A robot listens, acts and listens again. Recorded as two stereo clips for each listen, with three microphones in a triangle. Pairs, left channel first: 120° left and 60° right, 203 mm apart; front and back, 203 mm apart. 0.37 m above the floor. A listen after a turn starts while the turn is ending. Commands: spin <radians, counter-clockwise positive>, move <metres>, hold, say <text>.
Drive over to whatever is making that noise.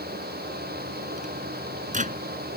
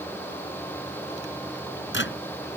spin -0.17
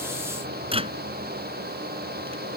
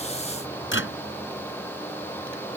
move 1.0
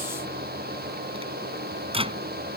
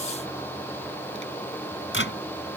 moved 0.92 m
move 1.0
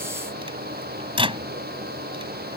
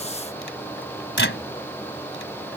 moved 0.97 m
move 1.0
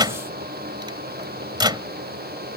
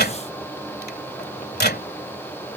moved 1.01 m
move 1.0
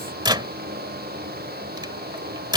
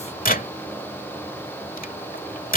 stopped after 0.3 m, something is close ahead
say I am next to the microwave.